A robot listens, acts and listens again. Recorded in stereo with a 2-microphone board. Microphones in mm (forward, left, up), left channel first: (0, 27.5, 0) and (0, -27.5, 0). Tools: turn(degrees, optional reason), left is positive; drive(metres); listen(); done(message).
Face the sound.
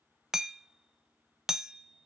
turn(degrees=-30)
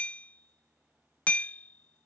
turn(degrees=25, reason="So it is at 25° left.")
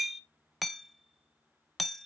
done("Found it: hammering, straight ahead.")